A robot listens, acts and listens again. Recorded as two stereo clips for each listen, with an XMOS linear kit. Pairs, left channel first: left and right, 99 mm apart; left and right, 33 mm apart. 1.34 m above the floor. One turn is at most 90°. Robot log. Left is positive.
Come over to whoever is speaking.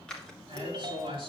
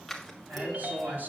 note: The man speaking: about 70° right or 110° right.
cmd yaw -70
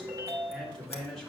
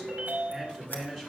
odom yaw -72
cmd fwd 1.0
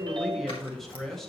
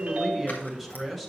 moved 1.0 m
cmd fwd 1.0
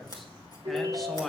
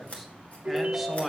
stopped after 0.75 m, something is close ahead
end: Arrived at the man speaking, straight ahead.